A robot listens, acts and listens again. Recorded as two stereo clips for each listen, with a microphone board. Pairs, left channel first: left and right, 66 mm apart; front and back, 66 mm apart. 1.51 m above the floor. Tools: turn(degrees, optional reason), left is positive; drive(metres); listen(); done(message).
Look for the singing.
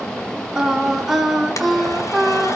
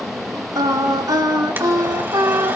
turn(degrees=180, reason="The singing: straight behind.")
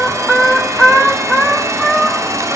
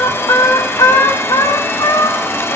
done("Facing the singing, over 4 m away.")